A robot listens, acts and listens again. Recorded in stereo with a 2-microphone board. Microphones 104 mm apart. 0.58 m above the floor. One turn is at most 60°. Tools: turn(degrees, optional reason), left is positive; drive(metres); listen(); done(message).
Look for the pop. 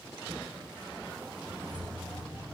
listen()
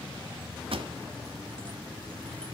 turn(degrees=-60, reason="The pop: about 70° right or 110° right.")
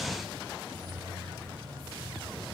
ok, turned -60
listen()
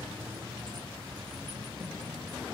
done("I heard a pop, but can't make it out now. It was about 10° right or 50° right.")